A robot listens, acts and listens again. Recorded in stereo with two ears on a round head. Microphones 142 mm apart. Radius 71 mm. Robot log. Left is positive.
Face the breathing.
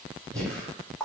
cmd yaw +30
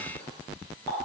cmd idle
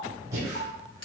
note: So it is at 20° right.
cmd yaw -20
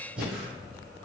end: Facing the breathing.